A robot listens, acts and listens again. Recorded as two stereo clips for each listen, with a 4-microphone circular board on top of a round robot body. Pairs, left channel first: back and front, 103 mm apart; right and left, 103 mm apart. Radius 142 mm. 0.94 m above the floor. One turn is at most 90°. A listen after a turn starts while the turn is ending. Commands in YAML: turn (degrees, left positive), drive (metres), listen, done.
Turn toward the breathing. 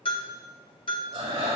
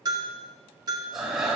done: "Facing the breathing."